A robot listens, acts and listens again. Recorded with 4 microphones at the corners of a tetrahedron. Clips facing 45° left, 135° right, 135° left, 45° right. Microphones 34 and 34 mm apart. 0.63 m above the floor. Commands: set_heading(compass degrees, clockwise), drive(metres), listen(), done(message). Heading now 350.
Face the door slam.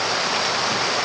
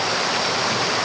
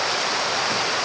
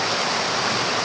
listen()
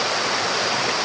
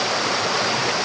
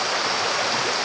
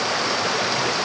listen()
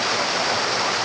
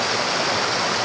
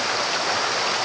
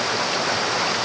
done("I can't make out a door slam.")